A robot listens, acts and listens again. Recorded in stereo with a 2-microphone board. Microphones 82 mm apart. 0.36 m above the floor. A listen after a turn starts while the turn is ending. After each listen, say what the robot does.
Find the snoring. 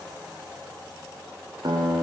Keep listening.
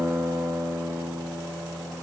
Keep listening.
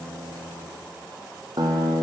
I can't make out snoring, only a guitar.